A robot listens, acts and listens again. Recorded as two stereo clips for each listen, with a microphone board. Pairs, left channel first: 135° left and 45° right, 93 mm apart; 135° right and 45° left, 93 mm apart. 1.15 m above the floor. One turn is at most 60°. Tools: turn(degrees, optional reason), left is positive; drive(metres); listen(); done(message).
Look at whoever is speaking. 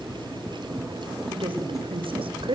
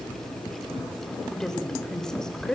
turn(degrees=-50, reason="The woman speaking: 50° right.")
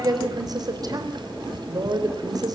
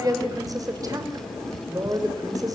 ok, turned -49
done("Facing the woman speaking.")